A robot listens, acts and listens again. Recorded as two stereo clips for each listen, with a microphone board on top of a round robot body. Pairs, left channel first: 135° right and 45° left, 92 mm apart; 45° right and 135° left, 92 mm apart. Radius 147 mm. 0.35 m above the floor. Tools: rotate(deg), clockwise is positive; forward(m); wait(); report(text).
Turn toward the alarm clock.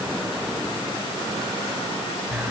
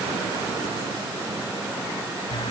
wait()
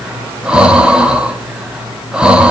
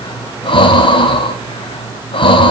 wait()
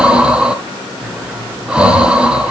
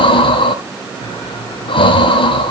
report("I can't make out an alarm clock to turn to.")